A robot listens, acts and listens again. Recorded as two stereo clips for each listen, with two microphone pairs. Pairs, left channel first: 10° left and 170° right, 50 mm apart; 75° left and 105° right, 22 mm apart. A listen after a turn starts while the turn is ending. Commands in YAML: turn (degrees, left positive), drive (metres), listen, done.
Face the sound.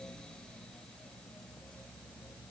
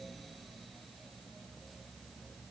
listen: true
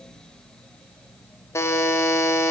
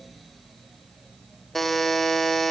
done: "Found it: a buzzer, straight ahead."